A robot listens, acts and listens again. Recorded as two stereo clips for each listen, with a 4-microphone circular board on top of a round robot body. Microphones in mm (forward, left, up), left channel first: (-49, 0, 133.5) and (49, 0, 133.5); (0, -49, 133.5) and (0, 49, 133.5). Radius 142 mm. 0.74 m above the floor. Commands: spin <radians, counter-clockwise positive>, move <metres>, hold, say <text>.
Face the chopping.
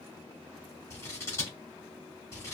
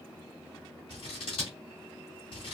hold
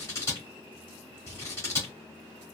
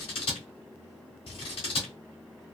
hold
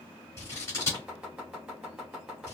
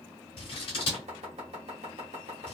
spin 1.40
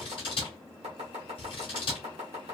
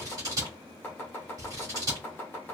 spin -0.26
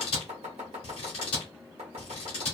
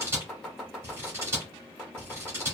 say Found it: chopping, straight ahead.